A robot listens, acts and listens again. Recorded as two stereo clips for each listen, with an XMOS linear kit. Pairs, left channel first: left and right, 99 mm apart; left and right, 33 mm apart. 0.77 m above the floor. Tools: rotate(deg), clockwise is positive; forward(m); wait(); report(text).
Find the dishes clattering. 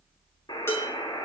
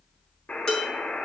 rotate(-25)
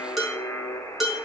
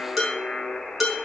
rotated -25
report("Facing the dishes clattering, over 4 m away.")